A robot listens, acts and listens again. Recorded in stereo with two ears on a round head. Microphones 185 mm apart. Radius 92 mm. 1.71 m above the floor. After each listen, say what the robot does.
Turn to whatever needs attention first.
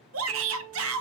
Turn 70° right.
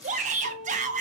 Turn 35° right.
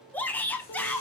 Turn 10° left.
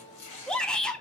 Facing the shout, under 1 m away.